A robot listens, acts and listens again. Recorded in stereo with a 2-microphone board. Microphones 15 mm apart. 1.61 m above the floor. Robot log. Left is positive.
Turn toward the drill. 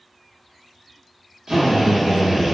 note: The drill: about 70° right or 110° right.
cmd yaw -70
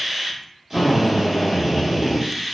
note: So it is at 20° right.
cmd yaw -20
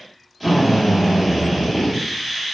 end: Found it: a drill, straight ahead, under 1 m away.